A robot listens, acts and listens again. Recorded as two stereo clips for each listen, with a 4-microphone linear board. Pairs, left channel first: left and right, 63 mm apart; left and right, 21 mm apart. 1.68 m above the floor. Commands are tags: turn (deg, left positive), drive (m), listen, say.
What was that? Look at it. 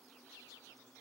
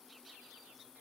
<listen/>
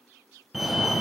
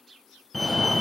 <turn deg="-30"/>
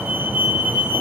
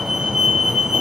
<turn deg="-150"/>
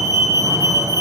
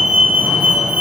<turn deg="-70"/>
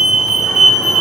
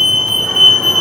<say>Facing the fire alarm.</say>